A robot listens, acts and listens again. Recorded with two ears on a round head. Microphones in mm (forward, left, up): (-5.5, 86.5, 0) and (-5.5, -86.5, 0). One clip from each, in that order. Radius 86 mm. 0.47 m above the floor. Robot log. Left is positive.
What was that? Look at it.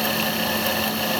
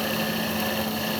cmd idle
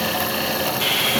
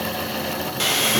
note: The sawing: about 40° right or 140° right.
cmd yaw -40
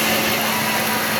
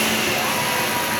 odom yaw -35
end: Found it: sawing, straight ahead, 2 to 4 m away.